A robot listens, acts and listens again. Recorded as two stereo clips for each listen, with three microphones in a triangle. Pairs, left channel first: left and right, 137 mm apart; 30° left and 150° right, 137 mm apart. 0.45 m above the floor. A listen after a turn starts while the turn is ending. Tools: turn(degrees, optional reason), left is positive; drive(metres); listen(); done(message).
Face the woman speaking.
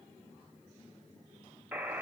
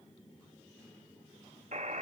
listen()
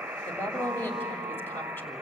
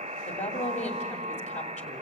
turn(degrees=20, reason="The woman speaking: 20° left.")
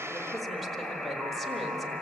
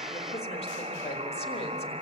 listen()
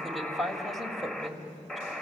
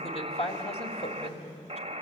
done("Found it: a woman speaking, straight ahead.")